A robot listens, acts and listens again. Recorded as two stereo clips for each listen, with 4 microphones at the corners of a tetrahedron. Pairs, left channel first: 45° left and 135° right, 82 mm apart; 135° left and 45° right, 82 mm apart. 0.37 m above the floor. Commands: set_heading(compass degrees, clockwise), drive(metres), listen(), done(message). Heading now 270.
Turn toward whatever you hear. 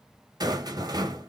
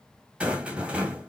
set_heading(25)
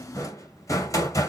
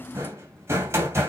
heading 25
done("Found it: a rattle, straight ahead.")